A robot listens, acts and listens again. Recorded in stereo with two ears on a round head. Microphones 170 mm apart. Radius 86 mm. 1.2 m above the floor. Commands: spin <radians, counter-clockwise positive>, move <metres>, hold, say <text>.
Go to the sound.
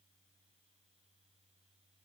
hold
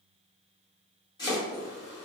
spin 0.35
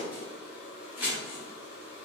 spin 2.36
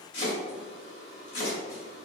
spin 1.05
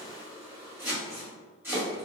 spin -0.26
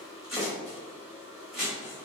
move 1.0
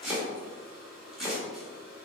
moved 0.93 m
move 1.0
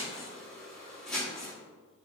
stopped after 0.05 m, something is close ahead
say Arrived at the chopping, straight ahead.